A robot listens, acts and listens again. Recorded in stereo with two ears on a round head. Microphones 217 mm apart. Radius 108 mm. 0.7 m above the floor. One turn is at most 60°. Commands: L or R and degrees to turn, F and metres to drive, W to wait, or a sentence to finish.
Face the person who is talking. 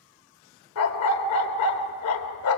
W
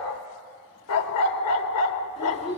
L30
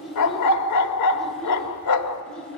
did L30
Found it: a child speaking, straight ahead.